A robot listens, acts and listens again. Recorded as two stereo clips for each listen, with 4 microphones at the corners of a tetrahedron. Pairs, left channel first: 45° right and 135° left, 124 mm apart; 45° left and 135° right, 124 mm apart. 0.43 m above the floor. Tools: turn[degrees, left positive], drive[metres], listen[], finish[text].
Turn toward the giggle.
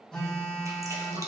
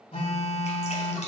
Action: listen[]
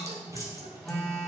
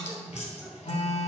Action: listen[]
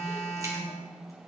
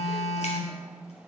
Action: finish[I can't make out a giggle, only dripping and a phone buzzing.]